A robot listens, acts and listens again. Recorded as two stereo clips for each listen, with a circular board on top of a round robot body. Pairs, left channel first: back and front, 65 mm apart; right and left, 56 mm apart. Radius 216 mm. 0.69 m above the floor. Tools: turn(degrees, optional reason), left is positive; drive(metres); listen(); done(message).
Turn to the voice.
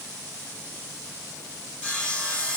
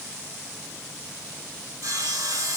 listen()
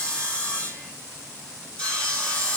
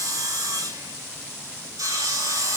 listen()
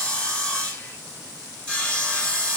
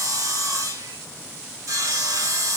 done("I can't make out anyone speaking, only sawing.")